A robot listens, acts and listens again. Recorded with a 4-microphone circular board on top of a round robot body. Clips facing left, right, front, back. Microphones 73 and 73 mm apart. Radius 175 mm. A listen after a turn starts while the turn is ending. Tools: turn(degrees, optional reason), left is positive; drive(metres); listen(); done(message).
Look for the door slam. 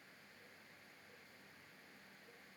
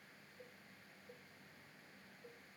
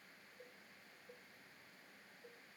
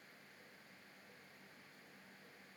listen()
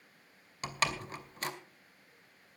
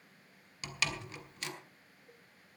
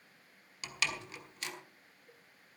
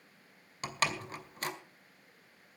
turn(degrees=135, reason="The door slam: 135° left.")
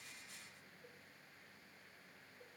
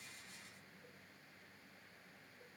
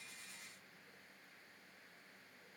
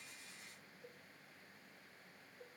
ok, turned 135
done("Facing where the door slam came from. I can't hear it now.")